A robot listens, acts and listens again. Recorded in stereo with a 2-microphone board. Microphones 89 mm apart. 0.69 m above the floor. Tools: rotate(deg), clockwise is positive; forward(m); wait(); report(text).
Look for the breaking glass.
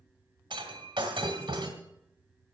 rotate(60)
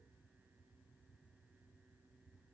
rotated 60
wait()
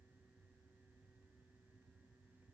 report("I heard breaking glass, but can't make it out now. It was about straight ahead or 60° right.")